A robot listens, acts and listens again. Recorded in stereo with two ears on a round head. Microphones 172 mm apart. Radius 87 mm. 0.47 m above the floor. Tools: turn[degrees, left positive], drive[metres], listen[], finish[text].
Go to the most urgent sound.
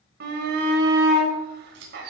Thought: The shout: about 60° right or 120° right.
Action: turn[-60]
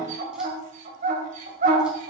Thought: So it is at 45° right.
Action: turn[-45]
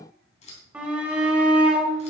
Action: drive[1.0]
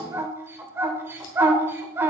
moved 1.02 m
Thought: The shout is now 15° right.
Action: turn[-15]
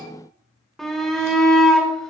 Action: drive[1.0]
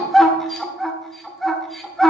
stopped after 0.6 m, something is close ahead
Action: finish[Arrived at the shout, straight ahead.]